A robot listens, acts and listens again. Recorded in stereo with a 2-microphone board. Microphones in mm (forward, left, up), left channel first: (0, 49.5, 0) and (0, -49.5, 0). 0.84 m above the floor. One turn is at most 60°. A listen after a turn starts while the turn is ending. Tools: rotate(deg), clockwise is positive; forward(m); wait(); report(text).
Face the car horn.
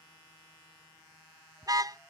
rotate(40)
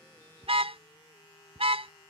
rotate(60)
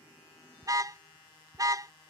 rotate(35)
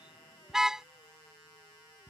report("Facing the car horn.")